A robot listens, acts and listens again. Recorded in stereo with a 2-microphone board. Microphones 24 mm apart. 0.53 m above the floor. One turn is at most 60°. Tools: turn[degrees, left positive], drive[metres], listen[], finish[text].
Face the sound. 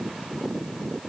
Action: listen[]
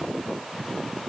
Action: listen[]
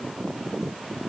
Action: finish[I can't make out anything to turn to.]